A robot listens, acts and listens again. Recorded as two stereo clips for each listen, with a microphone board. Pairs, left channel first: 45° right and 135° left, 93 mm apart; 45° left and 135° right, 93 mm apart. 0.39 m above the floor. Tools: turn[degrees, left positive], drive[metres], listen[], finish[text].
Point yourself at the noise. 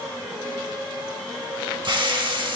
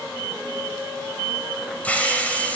Thought: The hiss: 115° left.
Action: turn[115]
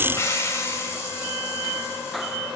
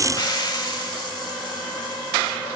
Thought: The hiss is now 10° left.
Action: turn[10]
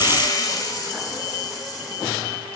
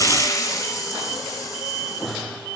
Action: finish[Found it: a hiss, straight ahead, under 1 m away.]